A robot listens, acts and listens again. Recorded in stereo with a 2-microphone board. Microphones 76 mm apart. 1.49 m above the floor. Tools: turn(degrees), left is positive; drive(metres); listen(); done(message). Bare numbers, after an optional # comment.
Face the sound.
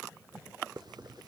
# The hiss: about 65° right or 115° right.
turn(-65)
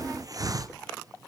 # So it is at 50° right.
turn(-50)
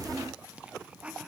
listen()
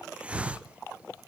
# The hiss is now 15° right.
turn(-15)
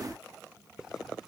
listen()
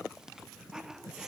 listen()
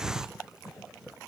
# The hiss is now 10° right.
turn(-10)
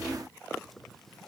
listen()
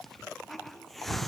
done("Found it: a hiss, straight ahead, under 1 m away.")